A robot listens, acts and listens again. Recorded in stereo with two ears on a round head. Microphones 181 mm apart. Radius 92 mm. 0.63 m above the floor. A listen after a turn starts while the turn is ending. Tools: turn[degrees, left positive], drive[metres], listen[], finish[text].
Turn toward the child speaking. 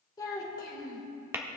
Thought: The child speaking: about 20° left or 160° left.
Action: turn[20]
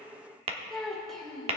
Action: finish[Found it: a child speaking, straight ahead.]